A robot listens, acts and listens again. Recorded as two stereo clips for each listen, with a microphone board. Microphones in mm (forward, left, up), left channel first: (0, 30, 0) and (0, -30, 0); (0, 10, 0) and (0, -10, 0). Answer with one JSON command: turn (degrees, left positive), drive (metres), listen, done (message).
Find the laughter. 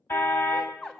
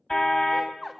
{"turn": 30}
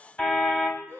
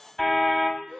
{"turn": 140}
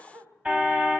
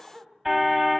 {"turn": -35}
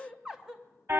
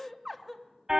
{"turn": -10}
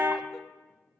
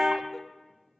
{"listen": true}
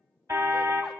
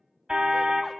{"listen": true}
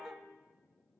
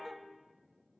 {"done": "I heard laughter from this way, but can't make it out now."}